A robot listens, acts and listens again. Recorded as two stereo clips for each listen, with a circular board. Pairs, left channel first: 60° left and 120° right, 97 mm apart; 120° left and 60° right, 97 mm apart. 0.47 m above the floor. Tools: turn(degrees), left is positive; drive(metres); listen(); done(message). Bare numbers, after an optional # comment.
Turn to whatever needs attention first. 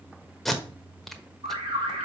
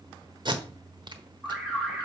# The alarm: 145° right.
turn(-145)
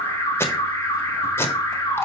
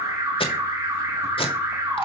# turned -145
done("Found it: an alarm, straight ahead.")